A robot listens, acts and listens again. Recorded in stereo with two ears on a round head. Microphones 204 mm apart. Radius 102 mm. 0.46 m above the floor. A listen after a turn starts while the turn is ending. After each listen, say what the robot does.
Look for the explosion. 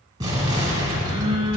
Turn 15° right.
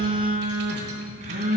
Keep listening.
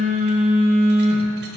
I heard an explosion, but can't make it out now. It was about straight ahead or 150° right.